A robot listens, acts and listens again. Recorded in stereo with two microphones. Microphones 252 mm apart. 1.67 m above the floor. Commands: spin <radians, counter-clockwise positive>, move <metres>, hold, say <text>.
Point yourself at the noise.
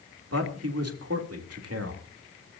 spin -1.22
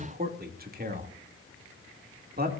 spin -0.70
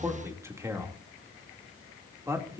spin -0.17
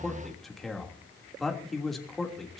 say Found it: a man speaking, straight ahead, 2 to 4 m away.